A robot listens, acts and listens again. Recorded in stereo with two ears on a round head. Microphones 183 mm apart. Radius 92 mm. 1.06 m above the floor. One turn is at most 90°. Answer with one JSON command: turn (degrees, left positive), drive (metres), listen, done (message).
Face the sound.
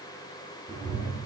{"turn": -35}
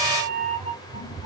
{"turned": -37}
{"turn": 10}
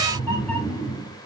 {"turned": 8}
{"turn": 10}
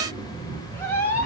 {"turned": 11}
{"turn": 15}
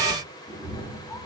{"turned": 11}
{"turn": 10}
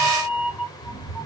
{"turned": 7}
{"done": "Found it: a cat meowing, straight ahead, 2 to 4 m away."}